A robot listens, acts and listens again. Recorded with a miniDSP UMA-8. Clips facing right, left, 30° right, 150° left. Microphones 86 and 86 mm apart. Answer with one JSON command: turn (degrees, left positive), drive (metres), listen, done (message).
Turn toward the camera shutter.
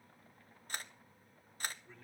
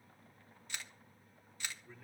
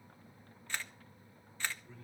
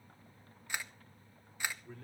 {"turn": -135}
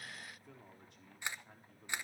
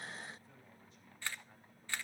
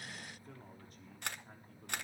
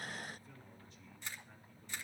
{"turn": -20}
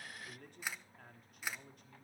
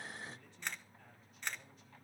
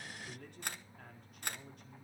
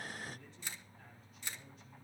{"done": "Found it: a camera shutter, straight ahead."}